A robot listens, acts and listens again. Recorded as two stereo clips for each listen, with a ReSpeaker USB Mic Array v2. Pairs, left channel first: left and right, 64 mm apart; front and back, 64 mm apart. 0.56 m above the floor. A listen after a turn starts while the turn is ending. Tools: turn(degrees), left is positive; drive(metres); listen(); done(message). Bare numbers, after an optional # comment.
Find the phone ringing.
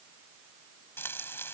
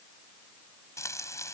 listen()
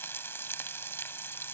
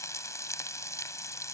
listen()
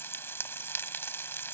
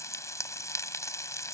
done("I can't make out a phone ringing to turn to.")